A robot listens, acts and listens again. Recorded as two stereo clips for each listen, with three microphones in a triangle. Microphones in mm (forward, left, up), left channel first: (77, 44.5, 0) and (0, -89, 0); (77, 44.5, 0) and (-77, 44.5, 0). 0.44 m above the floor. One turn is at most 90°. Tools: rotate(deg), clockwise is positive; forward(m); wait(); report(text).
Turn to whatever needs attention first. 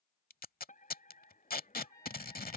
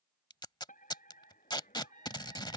rotate(-30)
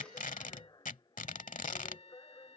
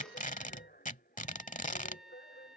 report("Facing the fire alarm.")